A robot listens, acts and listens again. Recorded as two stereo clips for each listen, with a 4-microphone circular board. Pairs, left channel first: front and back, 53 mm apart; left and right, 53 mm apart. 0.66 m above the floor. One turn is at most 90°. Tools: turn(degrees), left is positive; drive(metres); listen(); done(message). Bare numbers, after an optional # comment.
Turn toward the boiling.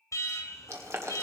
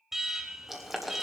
# The boiling: 175° right.
turn(-90)
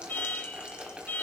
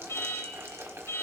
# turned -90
# The boiling is now 115° right.
turn(-90)
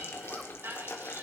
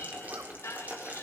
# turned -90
# The boiling is now 35° right.
turn(-35)
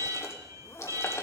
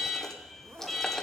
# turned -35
listen()
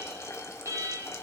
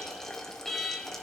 # The boiling is now 10° left.
turn(10)
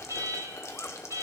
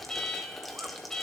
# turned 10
done("Found it: boiling, straight ahead, 1 to 2 m away.")